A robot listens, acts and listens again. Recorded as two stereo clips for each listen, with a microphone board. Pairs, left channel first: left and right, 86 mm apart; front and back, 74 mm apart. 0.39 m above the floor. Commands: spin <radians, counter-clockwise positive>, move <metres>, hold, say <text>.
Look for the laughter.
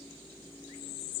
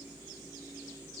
hold
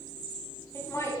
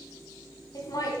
spin 0.61
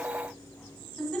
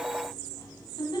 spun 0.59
spin 0.17
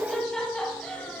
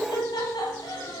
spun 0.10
spin 0.26
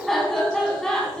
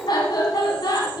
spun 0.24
spin 0.17
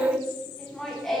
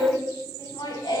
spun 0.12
say Found it: laughter, straight ahead, 2 to 4 m away.